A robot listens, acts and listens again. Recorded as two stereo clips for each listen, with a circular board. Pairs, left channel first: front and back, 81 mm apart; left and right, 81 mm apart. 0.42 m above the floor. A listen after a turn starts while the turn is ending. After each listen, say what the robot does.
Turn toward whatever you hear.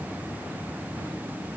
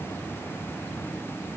Keep listening.
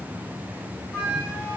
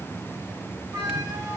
Turn 55° right.
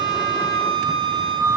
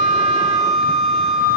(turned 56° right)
Found it: a flute, straight ahead.